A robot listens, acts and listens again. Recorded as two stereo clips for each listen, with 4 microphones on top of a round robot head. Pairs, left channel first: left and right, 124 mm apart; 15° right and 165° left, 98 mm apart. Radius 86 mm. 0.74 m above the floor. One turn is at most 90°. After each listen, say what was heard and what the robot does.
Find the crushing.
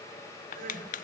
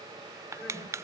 The crushing: 105° left. Turn 90° left.
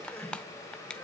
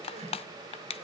Found it: crushing, straight ahead, under 1 m away.